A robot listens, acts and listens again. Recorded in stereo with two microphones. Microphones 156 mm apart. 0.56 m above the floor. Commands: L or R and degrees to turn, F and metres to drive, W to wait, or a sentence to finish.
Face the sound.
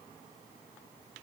W
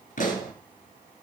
L55
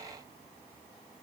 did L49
W
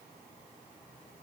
I heard a pop, but can't make it out now. It was about 10° left or 75° left.